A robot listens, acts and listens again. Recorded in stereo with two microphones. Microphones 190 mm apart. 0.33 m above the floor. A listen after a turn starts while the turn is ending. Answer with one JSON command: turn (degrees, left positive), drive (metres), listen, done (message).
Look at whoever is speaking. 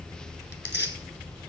{"listen": true}
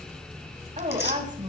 {"turn": -40}
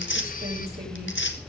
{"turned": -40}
{"listen": true}
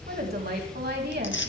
{"turn": -90}
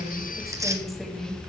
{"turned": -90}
{"done": "Facing the woman speaking, 2 to 4 m away."}